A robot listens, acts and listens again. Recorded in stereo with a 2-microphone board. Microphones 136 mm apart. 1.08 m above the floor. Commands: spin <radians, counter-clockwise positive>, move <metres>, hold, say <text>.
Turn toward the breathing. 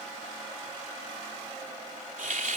hold
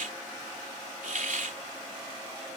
hold
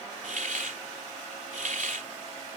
say I can't make out breathing, only a hiss.